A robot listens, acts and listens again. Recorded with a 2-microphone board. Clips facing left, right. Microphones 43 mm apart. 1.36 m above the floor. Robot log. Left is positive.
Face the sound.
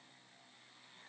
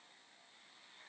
cmd idle
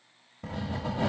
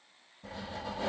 note: The writing: about 75° left or 105° left.
cmd yaw +75
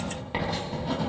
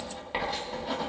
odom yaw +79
end: Facing the writing.